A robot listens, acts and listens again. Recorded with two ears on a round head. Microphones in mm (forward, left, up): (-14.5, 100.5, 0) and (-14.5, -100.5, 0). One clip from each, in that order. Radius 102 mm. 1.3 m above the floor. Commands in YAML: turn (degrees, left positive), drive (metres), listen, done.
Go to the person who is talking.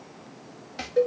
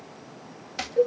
listen: true
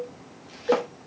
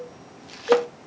listen: true
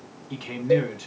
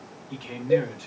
turn: 15
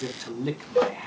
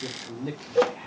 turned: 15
turn: 150
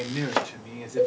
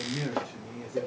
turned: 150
turn: 35
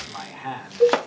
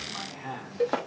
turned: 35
turn: 15
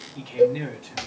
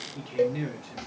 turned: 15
drive: 1.0
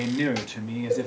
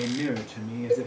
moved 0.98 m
turn: 20
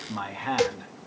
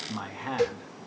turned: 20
drive: 1.0
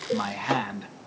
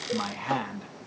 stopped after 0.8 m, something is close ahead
done: "I am next to the man speaking."